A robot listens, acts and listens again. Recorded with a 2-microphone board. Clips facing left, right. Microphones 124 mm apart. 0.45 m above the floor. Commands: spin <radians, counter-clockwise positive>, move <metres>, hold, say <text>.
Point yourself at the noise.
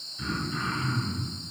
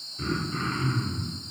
spin -0.70
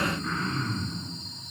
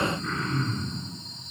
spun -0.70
say Facing the throat clearing.